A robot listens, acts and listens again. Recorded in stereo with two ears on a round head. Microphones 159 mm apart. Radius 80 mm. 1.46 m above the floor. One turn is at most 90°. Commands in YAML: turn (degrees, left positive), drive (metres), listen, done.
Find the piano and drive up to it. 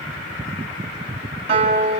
turn: -35
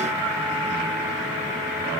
listen: true
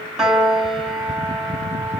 drive: 1.0
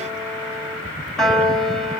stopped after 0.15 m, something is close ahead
done: "Blocked. The piano is further on, straight ahead."